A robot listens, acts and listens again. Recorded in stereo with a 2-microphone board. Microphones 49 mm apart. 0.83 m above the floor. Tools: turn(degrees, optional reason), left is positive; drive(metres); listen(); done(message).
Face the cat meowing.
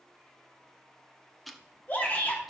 listen()
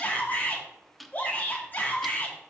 listen()
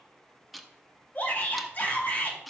done("I can't make out a cat meowing to turn to.")